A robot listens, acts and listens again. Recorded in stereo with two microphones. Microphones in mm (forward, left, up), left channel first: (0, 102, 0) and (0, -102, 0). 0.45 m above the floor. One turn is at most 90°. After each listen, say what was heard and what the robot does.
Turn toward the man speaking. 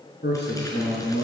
The man speaking: about 65° left or 115° left. Turn 65° left.
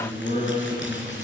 So it is at 40° left. Turn 40° left.
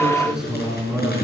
Facing the man speaking, over 4 m away.